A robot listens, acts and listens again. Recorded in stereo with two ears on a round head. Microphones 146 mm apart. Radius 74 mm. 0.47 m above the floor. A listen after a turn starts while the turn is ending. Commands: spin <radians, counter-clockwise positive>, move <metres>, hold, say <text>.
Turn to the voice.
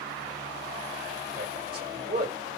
spin -0.96
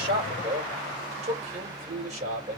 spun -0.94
spin -0.96
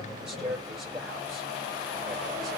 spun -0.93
say Facing the man speaking, 2 to 4 m away.